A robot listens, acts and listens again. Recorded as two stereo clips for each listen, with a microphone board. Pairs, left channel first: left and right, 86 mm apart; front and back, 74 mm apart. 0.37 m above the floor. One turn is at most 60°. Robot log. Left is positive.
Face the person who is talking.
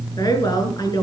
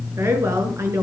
note: The woman speaking: 130° left.
cmd yaw +60
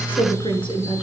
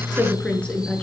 note: The woman speaking is now 75° left.
cmd yaw +60
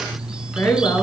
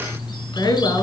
note: The woman speaking is now 35° left.
cmd yaw +35
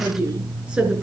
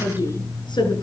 note: The woman speaking is now 10° right.
cmd yaw -10
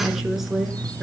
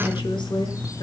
end: Facing the woman speaking.